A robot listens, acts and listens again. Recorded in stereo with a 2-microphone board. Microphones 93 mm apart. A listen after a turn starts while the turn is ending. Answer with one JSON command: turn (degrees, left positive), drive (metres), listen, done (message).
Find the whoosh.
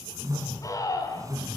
{"turn": -35}
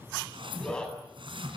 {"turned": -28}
{"turn": -115}
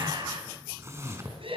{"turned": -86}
{"turn": -30}
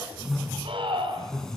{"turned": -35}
{"done": "Facing the whoosh."}